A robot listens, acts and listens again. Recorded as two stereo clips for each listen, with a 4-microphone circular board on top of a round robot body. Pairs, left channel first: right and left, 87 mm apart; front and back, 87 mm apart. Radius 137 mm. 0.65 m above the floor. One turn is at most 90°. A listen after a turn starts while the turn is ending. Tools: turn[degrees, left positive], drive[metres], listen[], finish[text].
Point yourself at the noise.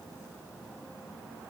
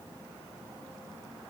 Action: listen[]
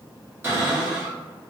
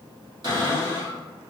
Thought: The cupboard door: 155° left.
Action: turn[90]
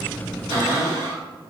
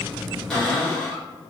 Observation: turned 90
Thought: The cupboard door is now 80° left.
Action: turn[80]
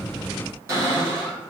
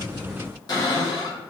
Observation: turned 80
Thought: The cupboard door is now 35° left.
Action: turn[35]
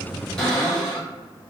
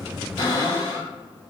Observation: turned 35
Thought: The cupboard door is now 10° right.
Action: turn[-10]
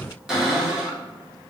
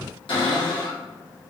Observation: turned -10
Action: finish[Found it: a cupboard door, straight ahead.]